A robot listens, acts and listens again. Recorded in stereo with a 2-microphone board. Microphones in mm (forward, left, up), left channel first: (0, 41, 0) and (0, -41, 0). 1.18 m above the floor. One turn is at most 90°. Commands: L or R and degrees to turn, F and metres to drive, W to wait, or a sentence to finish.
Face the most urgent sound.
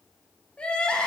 L30
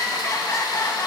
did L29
L90
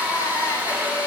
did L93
L45
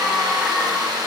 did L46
Facing the crying.